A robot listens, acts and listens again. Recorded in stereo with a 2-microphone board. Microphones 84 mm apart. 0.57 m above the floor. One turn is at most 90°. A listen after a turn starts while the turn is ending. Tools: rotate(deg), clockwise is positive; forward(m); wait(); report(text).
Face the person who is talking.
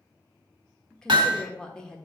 rotate(-30)
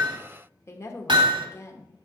rotate(-90)
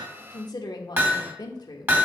rotate(-85)
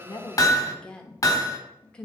rotate(-15)
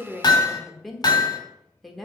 report("Found it: a woman speaking, straight ahead.")